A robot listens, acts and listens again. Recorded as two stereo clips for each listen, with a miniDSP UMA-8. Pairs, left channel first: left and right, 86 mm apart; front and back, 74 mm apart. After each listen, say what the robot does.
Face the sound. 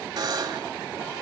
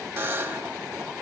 Turn 125° right.
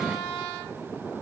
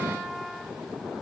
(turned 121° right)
Keep listening.
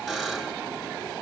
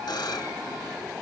Facing the buzzer, 1 to 2 m away.